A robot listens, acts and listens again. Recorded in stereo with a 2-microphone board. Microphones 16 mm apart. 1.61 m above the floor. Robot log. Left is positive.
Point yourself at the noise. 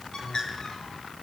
note: The bird: about 55° left or 125° left.
cmd yaw +55
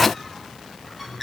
end: Facing the bird.